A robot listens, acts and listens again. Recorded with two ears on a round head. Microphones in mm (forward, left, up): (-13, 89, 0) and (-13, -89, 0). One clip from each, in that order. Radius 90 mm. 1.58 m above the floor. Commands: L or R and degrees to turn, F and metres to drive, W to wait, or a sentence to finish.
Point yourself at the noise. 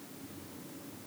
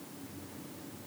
W
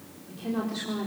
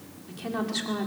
R55
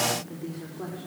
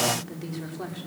R60
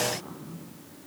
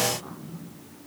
R25
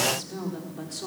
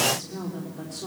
L15
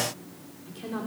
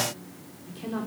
Facing the woman speaking, over 4 m away.